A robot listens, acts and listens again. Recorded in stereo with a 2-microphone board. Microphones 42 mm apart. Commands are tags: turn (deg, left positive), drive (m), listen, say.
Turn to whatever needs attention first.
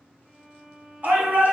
<turn deg="-45"/>
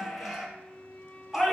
<say>Found it: a shout, straight ahead, 2 to 4 m away.</say>